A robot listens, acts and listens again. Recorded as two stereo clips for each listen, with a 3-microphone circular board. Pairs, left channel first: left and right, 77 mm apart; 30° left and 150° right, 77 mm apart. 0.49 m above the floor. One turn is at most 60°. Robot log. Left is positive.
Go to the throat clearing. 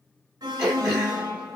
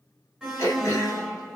note: The throat clearing: 15° right.
cmd yaw -15
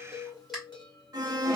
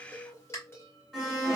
cmd fwd 1.0
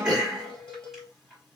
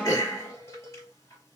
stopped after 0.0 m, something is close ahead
end: Something is in my way. I am facing the throat clearing but have not reached it.